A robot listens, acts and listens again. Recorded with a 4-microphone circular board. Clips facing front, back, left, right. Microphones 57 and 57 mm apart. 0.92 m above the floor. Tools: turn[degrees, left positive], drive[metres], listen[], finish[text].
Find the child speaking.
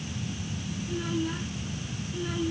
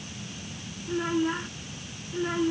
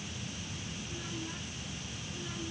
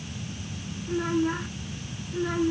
Thought: The child speaking: 125° right.
Action: turn[-125]
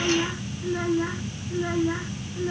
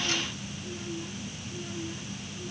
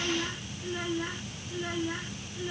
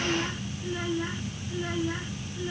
Action: finish[Facing the child speaking.]